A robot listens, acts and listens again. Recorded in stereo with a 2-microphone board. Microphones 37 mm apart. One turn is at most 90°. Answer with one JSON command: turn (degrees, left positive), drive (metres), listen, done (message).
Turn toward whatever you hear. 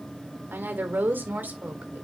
{"turn": -50}
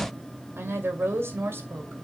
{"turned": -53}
{"turn": -75}
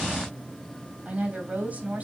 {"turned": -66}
{"turn": -40}
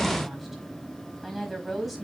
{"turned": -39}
{"done": "Found it: a woman speaking, straight ahead, 2 to 4 m away."}